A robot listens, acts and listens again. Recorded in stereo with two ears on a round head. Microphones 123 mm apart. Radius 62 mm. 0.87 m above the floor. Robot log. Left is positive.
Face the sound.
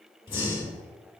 note: The breathing: about 40° left or 140° left.
cmd yaw +40
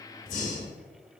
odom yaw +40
note: So it is at 95° left.
cmd yaw +95
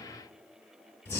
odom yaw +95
note: The breathing is now 20° left.
cmd yaw +20
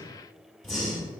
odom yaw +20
end: Found it: breathing, straight ahead.